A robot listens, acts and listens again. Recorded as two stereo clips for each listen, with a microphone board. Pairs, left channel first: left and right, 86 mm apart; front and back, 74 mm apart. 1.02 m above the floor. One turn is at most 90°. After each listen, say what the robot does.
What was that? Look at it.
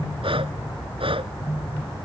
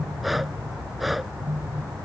Turn 90° right.
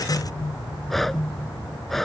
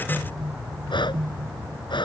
Facing the breathing.